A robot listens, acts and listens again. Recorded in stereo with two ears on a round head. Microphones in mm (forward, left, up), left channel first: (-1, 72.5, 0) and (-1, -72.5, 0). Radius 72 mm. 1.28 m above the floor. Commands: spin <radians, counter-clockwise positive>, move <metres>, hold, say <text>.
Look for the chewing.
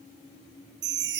hold
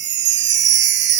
hold
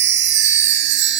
say I can't make out chewing, only a chime.